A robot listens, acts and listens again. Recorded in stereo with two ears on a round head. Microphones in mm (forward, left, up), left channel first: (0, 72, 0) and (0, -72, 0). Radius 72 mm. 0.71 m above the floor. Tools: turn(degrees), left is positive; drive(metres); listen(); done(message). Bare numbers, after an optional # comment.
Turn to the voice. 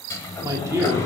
# The man speaking: about 15° right or 165° right.
turn(-15)
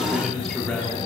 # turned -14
turn(30)
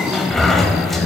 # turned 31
listen()
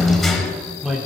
done("Facing the man speaking.")